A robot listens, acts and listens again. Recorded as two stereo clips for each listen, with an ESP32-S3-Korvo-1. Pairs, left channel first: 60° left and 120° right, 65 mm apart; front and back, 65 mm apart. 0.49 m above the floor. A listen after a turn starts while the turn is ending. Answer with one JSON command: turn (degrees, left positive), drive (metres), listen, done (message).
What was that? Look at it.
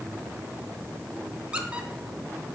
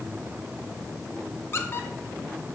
{"turn": -50}
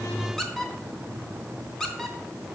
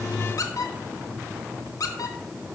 {"turn": -25}
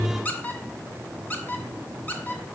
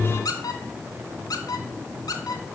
{"done": "Facing the squeak."}